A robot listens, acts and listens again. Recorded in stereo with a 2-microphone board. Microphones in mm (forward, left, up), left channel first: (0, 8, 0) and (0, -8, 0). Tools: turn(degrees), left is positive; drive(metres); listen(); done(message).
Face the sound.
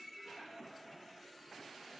listen()
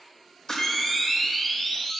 turn(degrees=35)
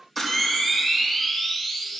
done("Found it: a camera shutter, straight ahead.")